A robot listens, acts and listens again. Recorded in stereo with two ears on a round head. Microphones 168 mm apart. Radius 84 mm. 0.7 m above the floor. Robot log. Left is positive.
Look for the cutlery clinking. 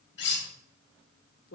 note: The cutlery clinking: about 65° left or 115° left.
cmd yaw +65
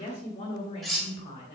end: Found it: cutlery clinking, straight ahead.